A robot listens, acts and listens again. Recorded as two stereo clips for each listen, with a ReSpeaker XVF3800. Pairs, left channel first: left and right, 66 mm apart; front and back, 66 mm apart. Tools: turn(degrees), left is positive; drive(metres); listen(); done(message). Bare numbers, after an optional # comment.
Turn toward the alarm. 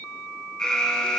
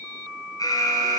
# The alarm: 10° left.
turn(10)
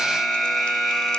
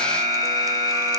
done("Facing the alarm.")